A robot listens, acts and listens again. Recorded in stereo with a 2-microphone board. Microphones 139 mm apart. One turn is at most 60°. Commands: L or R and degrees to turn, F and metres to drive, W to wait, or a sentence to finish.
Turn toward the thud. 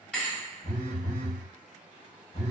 L30
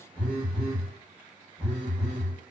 W
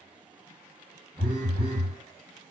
I heard a thud, but can't make it out now. It was about 20° right or 140° left.